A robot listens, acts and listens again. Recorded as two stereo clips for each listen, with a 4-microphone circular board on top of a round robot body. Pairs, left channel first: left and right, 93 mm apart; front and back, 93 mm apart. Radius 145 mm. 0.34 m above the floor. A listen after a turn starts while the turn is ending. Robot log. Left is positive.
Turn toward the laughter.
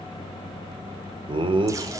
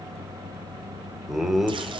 note: The laughter: 95° right.
cmd yaw -95
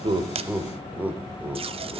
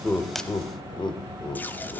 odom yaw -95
note: The laughter is now 20° right.
cmd yaw -20
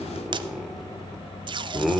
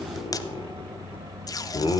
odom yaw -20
end: Found it: laughter, straight ahead, 1 to 2 m away.